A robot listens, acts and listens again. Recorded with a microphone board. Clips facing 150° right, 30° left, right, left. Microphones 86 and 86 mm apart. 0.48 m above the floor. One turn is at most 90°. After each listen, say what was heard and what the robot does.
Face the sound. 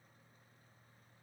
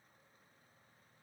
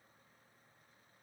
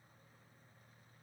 Keep listening.
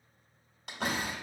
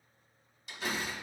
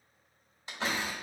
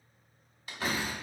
The door slam: 150° right. Turn 90° right.
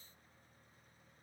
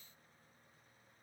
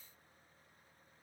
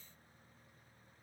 Nothing new. It was at 60° right. Turn 60° right.
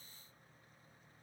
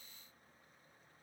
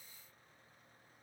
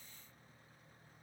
I heard a door slam from this way, but can't make it out now.